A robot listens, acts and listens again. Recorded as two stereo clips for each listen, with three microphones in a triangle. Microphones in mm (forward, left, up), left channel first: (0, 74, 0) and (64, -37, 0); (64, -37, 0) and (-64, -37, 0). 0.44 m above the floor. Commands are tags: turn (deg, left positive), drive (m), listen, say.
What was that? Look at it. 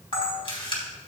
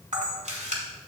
<turn deg="165"/>
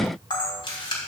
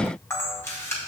<turn deg="70"/>
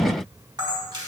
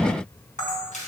<say>Found it: a camera shutter, straight ahead.</say>